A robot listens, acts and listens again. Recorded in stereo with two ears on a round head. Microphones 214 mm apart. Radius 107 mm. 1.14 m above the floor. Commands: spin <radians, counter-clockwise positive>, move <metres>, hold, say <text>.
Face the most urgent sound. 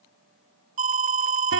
spin -0.52
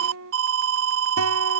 spin -2.09
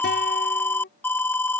spin 0.17
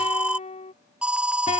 say Facing the alarm.